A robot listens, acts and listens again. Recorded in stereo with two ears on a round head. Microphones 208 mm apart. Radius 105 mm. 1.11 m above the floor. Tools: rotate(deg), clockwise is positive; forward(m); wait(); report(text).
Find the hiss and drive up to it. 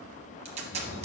wait()
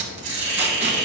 rotate(90)
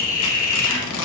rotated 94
rotate(-10)
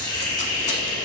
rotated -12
forward(1.0)
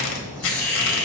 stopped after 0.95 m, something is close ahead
report("Arrived at the hiss, straight ahead.")